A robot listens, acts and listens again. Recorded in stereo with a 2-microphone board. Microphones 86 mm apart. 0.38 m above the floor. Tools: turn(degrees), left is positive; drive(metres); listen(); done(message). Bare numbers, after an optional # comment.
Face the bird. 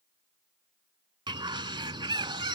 # The bird: about 70° right or 110° right.
turn(-70)
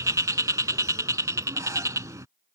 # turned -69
# So it is at 40° right.
turn(-40)
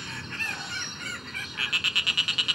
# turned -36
done("Found it: a bird, straight ahead.")